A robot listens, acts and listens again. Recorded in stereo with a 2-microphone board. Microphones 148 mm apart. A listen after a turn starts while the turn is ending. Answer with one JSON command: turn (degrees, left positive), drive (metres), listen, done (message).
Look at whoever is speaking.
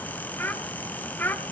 {"turn": 30}
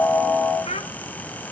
{"turn": 135}
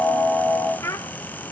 {"turn": 20}
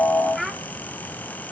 {"done": "Facing the child speaking."}